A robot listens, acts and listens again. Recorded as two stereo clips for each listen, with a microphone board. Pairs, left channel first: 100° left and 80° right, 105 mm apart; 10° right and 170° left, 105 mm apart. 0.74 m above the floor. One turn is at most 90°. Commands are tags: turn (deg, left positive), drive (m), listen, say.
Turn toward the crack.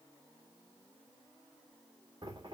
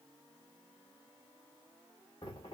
<listen/>
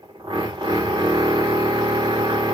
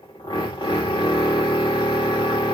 <listen/>
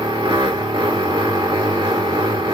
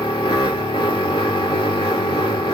<say>I can't make out a crack to turn to.</say>